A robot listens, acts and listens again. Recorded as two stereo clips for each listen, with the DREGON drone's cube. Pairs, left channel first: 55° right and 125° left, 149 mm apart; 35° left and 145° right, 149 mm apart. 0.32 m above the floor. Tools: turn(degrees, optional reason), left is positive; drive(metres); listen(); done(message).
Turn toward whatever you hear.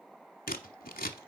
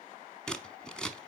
turn(degrees=-50, reason="The scissors: 50° right.")
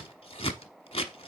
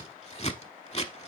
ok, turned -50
done("Facing the scissors.")